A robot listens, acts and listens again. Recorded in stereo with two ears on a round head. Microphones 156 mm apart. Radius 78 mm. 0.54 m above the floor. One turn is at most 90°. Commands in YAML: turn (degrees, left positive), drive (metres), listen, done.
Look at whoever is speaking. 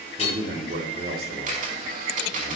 turn: -60
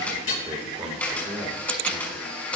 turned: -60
turn: -20
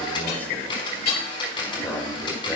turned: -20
turn: 15
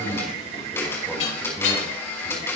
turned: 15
done: "Facing the man speaking."